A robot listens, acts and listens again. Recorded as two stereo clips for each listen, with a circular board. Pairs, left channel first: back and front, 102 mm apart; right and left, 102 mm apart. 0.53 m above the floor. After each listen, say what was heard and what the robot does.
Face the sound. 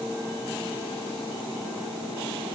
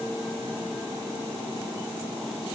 Keep listening.
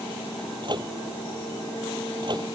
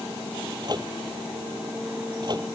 The microwave: 45° left. Turn 45° left.
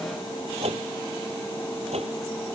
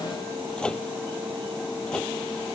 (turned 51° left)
The microwave is now 10° right. Turn 10° right.
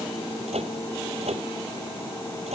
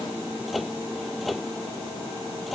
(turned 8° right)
Facing the microwave.